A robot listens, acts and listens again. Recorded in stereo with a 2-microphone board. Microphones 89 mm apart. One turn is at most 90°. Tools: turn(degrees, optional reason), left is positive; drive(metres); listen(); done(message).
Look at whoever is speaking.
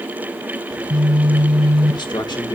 turn(degrees=55, reason="The man speaking: about 55° left or 125° left.")
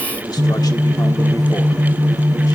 listen()
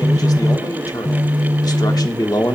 turn(degrees=55, reason="So it is at 55° left.")
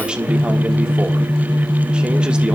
turn(degrees=-15, reason="The man speaking is now 15° right.")
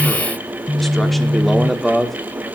done("Facing the man speaking.")